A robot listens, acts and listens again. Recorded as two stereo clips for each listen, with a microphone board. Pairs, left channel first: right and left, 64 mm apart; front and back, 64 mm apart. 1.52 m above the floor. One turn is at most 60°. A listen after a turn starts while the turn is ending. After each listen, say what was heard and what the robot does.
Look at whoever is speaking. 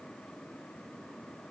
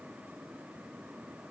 Keep listening.
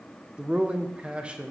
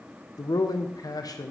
The man speaking: 15° left. Turn 15° left.
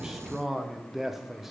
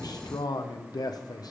Found it: a man speaking, straight ahead.